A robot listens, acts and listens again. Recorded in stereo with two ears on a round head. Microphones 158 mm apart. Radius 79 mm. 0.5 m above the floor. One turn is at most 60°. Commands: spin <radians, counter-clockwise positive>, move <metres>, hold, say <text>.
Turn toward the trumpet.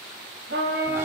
spin -1.05
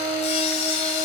spin -0.35
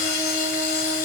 hold
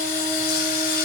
hold
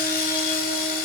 say I heard a trumpet from this way, but can't make it out now.